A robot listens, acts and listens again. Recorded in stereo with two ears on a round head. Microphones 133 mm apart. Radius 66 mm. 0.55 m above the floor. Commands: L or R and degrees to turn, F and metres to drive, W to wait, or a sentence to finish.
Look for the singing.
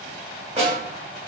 W
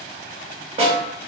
W
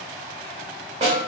I can't make out singing, only a snare drum.